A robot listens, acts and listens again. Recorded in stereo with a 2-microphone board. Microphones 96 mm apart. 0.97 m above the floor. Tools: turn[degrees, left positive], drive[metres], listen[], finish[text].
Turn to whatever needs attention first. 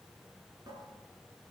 Action: listen[]
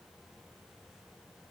Action: listen[]
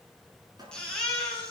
Action: turn[30]
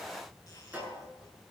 Action: listen[]
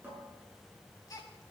Thought: So it is at 145° left.
Action: turn[145]
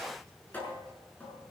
Action: listen[]
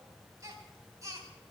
Thought: The baby crying is now 35° right.
Action: turn[-35]
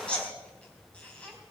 Thought: The baby crying is now 15° left.
Action: turn[15]
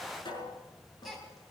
Action: finish[Found it: a baby crying, straight ahead.]